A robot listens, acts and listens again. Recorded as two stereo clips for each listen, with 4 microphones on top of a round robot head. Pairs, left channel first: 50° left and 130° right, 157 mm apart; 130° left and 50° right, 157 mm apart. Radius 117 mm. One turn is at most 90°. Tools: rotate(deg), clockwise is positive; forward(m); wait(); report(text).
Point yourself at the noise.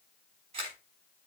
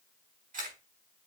rotate(80)
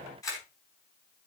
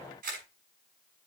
rotate(20)
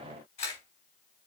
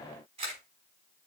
report("Facing the camera shutter.")